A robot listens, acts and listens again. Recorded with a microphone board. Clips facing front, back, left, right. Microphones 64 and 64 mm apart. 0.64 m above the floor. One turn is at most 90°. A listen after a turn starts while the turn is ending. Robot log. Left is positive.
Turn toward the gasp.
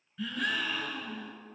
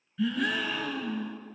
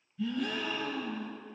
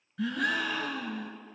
note: The gasp: 90° right.
cmd yaw -90
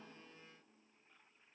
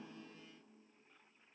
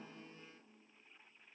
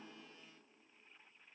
end: Facing where the gasp came from. I can't hear it now.